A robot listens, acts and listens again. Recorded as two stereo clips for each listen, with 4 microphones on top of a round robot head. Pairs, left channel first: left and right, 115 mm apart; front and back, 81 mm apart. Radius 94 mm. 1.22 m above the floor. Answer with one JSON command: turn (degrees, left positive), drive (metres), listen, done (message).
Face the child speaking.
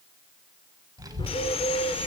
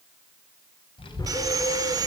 {"turn": -35}
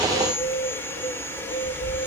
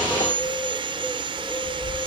{"turn": -10}
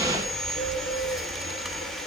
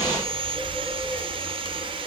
{"done": "Facing the child speaking."}